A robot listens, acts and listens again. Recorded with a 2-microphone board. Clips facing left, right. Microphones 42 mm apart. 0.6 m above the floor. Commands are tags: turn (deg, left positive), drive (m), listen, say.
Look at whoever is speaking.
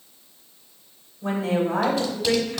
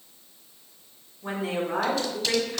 <turn deg="65"/>
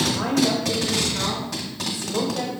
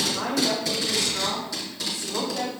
<say>Facing the woman speaking.</say>